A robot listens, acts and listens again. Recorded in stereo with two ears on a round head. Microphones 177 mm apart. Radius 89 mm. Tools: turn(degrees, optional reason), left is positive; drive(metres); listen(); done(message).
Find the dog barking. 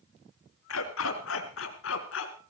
turn(degrees=70, reason="The dog barking: about 70° left or 110° left.")
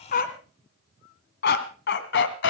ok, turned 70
turn(degrees=65, reason="So it is at 65° left.")
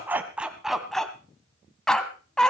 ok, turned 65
done("Facing the dog barking.")